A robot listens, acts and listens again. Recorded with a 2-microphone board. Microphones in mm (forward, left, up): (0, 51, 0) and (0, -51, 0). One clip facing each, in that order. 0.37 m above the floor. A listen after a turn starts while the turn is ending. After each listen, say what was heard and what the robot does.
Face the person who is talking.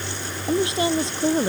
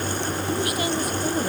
The woman speaking: about 25° left or 155° left. Turn 25° left.
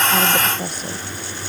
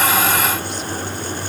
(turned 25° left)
Keep listening.
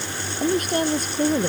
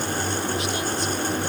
So it is at 130° left. Turn 130° left.
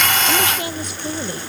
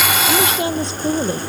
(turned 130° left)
The woman speaking is now 25° right. Turn 25° right.
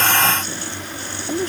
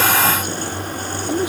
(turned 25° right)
The woman speaking is now 10° right. Turn 10° right.
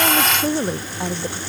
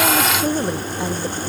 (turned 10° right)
Facing the woman speaking.